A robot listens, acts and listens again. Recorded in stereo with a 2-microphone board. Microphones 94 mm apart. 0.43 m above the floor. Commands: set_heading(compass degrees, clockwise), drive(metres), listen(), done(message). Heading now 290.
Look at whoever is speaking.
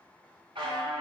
listen()
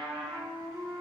listen()
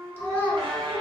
set_heading(265)
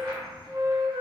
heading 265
listen()
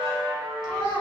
set_heading(140)
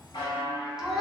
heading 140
done("Found it: a child speaking, straight ahead.")